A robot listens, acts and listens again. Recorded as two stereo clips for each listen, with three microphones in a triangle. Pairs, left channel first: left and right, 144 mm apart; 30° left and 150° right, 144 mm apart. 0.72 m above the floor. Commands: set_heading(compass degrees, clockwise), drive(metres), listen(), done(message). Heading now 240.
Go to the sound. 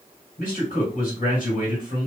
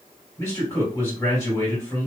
set_heading(140)
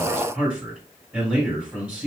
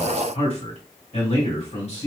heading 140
set_heading(150)
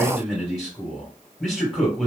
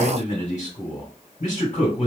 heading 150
drive(1.0)
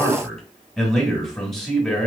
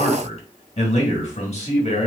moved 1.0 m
drive(1.0)
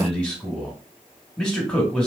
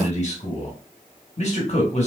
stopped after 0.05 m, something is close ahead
done("Arrived at the man speaking, straight ahead.")